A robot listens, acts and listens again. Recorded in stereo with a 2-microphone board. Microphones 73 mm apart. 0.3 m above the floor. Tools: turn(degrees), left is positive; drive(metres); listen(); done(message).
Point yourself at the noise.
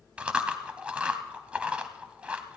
turn(degrees=-15)
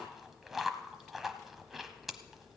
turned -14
done("Found it: chewing, straight ahead, under 1 m away.")